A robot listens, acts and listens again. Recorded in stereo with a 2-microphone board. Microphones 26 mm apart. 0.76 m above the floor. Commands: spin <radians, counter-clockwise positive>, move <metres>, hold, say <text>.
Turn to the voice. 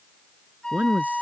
spin -1.22
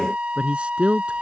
spin -0.70
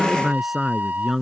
say Facing the man speaking.